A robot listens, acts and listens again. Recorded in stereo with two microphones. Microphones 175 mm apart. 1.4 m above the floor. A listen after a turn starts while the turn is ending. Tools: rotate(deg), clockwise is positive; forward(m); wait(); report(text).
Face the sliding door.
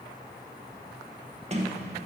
rotate(40)
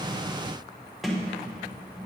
report("Facing the sliding door.")